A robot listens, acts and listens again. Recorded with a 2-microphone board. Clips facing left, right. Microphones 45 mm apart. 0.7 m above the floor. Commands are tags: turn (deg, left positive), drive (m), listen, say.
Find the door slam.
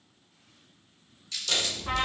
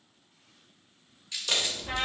<turn deg="-20"/>
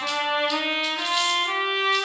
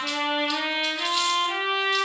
<listen/>
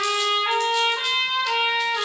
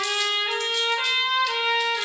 <say>I heard a door slam, but can't make it out now. It was about straight ahead or 140° right.</say>